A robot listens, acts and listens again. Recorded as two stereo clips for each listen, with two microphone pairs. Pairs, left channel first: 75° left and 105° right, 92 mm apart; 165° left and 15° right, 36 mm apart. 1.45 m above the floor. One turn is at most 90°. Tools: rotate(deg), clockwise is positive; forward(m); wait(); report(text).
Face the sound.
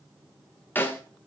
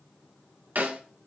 rotate(-10)
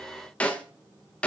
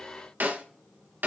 report("Facing the snare drum.")